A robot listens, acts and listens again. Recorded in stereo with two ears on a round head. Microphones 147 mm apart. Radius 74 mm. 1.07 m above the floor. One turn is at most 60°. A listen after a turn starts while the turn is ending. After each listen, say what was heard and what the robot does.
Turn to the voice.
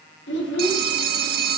The child speaking: about 70° left or 110° left. Turn 60° left.
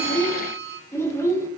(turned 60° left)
So it is at 15° left. Turn 15° left.
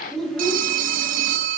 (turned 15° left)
Facing the child speaking.